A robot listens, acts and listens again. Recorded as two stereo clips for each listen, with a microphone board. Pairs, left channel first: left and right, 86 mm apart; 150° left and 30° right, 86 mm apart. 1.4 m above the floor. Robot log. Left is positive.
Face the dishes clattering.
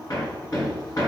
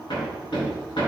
cmd idle
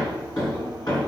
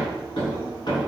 cmd idle
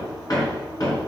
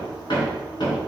end: I can't make out dishes clattering to turn to.